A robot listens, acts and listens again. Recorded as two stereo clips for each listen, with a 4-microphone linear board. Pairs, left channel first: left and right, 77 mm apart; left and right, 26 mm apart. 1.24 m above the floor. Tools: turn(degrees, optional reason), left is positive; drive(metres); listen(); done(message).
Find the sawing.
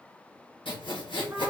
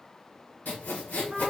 turn(degrees=90)
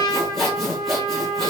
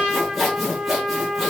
done("Found it: sawing, straight ahead, 1 to 2 m away.")